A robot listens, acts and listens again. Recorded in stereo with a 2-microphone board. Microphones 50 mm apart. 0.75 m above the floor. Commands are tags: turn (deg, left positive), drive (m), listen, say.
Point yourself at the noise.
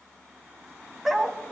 <turn deg="-30"/>
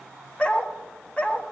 <turn deg="25"/>
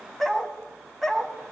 <say>Found it: a dog barking, straight ahead, 1 to 2 m away.</say>